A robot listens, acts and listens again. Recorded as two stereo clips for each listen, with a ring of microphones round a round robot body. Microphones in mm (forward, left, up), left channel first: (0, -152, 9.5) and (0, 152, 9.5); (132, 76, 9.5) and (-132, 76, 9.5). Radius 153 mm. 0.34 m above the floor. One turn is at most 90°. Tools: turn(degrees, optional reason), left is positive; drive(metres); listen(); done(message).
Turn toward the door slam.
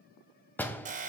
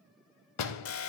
done("Found it: a door slam, straight ahead.")